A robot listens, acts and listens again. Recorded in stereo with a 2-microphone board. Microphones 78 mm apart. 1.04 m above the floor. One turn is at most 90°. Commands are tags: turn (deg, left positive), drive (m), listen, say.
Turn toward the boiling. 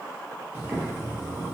<turn deg="-30"/>
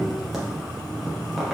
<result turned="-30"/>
<say>Facing the boiling, under 1 m away.</say>